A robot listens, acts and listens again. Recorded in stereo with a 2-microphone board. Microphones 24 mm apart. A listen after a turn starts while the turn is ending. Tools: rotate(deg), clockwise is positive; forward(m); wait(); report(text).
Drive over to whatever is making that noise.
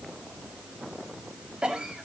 rotate(45)
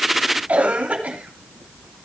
rotate(90)
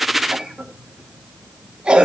rotate(35)
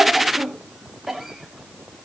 rotate(10)
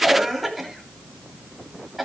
forward(1.0)
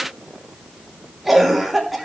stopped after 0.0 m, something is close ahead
report("Blocked. The cough is further on, straight ahead.")